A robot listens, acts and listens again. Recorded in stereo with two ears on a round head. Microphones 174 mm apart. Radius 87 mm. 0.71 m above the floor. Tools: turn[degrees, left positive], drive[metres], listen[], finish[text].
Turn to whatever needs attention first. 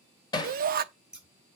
Thought: The shout: about 45° right or 135° right.
Action: turn[-45]
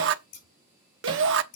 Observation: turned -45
Thought: So it is at 85° right.
Action: turn[-85]
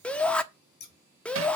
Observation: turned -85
Action: finish[Facing the shout, 1 to 2 m away.]